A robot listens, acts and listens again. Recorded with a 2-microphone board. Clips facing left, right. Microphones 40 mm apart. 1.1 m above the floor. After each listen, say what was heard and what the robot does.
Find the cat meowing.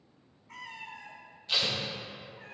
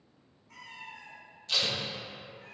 The cat meowing: about 45° left or 135° left. Turn 45° left.
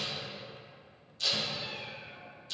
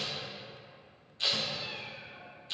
So it is at 20° right. Turn 20° right.
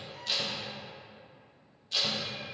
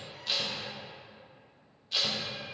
Keep listening.
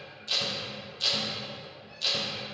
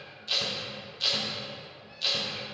Keep listening.
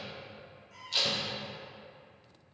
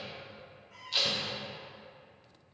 The cat meowing is now 10° right. Turn 10° right.
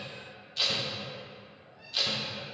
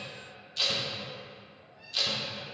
Found it: a cat meowing, straight ahead.